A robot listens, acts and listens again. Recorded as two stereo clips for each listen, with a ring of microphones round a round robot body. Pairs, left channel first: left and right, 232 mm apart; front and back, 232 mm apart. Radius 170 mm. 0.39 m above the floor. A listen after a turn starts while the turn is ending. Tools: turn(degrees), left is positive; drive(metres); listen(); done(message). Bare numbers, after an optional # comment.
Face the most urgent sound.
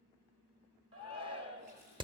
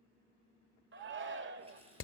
# The shout: 155° right.
turn(-155)
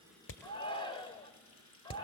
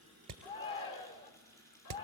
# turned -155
# The shout is now 25° left.
turn(25)
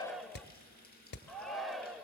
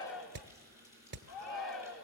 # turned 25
done("Found it: a shout, straight ahead, 1 to 2 m away.")